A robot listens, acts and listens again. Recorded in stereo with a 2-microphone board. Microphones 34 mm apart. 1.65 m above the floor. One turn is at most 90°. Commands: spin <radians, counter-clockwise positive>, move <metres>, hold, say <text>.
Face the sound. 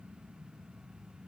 hold
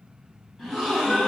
spin 0.52
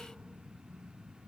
hold
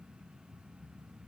say I heard a gasp, but can't make it out now. It was about 25° right or 145° left.